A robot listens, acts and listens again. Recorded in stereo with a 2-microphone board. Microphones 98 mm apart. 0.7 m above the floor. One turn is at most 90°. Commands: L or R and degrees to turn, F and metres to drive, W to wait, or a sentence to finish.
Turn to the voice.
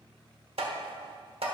W
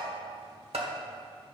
W
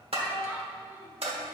R20
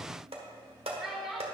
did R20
Found it: a child speaking, straight ahead.